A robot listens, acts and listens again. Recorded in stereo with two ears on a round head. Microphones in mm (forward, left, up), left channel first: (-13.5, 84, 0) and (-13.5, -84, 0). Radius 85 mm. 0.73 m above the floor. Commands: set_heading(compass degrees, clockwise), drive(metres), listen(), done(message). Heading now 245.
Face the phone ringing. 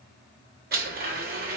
listen()
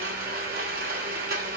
listen()
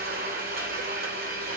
done("I can't make out a phone ringing, only a blender.")